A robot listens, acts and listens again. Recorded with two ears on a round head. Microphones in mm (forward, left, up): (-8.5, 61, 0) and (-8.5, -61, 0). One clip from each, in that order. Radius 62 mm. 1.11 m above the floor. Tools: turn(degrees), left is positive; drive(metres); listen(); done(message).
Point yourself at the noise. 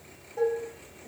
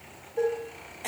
turn(degrees=50)
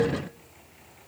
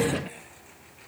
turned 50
listen()
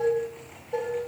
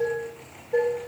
turn(degrees=80)
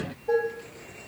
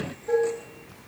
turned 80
turn(degrees=10)
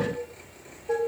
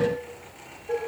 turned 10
done("Facing the dishes clattering.")